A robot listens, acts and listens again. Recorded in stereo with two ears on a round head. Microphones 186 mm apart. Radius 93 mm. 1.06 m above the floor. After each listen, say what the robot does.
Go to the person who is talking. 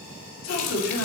Turn 60° left.
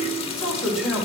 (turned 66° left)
Drive 1.0 m forward.
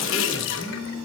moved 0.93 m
Keep listening.
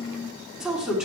Drive 1.0 m forward.
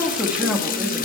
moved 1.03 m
Drive 1.0 m forward.
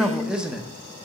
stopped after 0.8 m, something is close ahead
Arrived at the man speaking, straight ahead.